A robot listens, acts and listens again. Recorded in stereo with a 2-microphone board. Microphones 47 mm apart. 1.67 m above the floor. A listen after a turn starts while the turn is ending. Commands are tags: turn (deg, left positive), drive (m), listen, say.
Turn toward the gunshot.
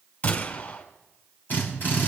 <turn deg="45"/>
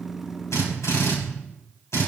<listen/>
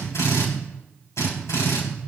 <say>I heard a gunshot, but can't make it out now. It was about straight ahead or 90° left.</say>